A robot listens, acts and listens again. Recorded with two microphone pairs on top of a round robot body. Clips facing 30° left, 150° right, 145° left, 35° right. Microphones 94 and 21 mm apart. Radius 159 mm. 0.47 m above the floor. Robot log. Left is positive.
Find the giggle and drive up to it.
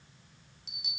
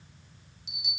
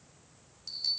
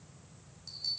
cmd idle
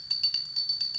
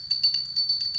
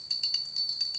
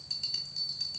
cmd idle
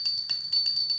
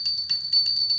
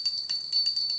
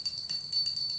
end: I can't make out a giggle to turn to.